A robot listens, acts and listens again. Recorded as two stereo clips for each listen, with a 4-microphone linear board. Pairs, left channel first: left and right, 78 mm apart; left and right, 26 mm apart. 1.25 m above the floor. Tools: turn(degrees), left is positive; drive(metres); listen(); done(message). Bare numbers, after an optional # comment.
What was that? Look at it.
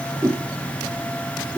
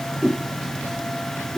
# The whoosh: about 45° right or 135° right.
turn(-45)
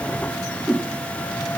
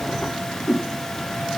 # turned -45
done("Facing the whoosh.")